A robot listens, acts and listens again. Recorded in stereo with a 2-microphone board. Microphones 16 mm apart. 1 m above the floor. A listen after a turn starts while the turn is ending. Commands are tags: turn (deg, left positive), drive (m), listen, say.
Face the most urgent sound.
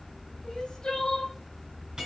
<turn deg="55"/>
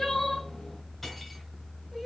<turn deg="10"/>
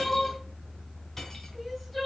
<say>Facing the crying, 1 to 2 m away.</say>